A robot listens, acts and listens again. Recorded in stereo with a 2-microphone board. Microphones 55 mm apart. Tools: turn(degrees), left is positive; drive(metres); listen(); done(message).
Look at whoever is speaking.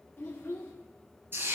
turn(degrees=40)
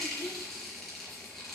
listen()
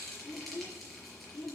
turn(degrees=90)
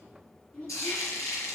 turn(degrees=20)
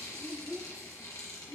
done("Facing the child speaking, 1 to 2 m away.")